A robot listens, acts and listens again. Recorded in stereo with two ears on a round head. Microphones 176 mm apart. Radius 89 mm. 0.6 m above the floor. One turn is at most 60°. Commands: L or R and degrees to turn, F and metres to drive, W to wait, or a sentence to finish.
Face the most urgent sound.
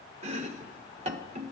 W
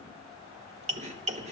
W
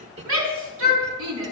R60
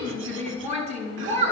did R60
R35
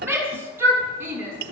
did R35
R10
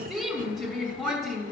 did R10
Found it: a shout, straight ahead, over 4 m away.